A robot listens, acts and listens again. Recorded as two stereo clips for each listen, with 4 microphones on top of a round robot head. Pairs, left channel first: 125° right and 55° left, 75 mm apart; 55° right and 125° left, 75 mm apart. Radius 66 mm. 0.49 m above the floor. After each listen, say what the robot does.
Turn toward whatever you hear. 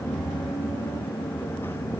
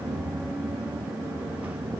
Keep listening.
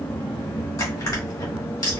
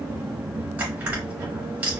Turn 165° right.
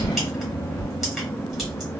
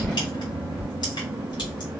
Turn 35° right.
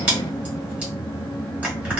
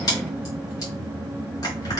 Turn 15° right.
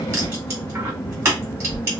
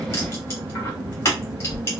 Facing the crushing, 1 to 2 m away.